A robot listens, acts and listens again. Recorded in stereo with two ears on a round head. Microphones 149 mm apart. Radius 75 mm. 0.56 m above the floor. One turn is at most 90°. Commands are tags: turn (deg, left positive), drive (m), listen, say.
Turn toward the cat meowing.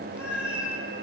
<turn deg="-30"/>
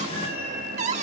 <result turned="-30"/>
<turn deg="-90"/>
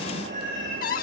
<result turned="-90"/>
<turn deg="-45"/>
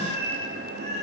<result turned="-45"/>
<turn deg="-40"/>
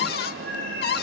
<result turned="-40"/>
<turn deg="10"/>
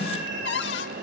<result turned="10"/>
<say>Facing the cat meowing, over 4 m away.</say>